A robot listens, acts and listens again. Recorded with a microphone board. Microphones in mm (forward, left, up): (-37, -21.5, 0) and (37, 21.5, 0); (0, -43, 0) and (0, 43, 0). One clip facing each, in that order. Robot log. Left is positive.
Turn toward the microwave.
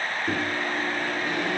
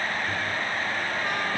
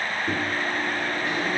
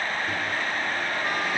note: The microwave: 140° right.
cmd yaw -140
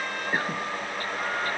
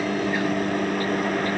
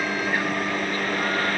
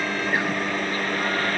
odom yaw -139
end: Found it: a microwave, straight ahead.